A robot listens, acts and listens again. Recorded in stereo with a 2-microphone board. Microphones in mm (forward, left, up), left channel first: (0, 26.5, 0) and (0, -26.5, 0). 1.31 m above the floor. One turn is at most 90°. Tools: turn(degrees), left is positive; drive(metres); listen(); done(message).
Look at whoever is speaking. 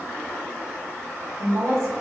turn(degrees=-65)
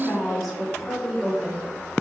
done("Facing the woman speaking, 2 to 4 m away.")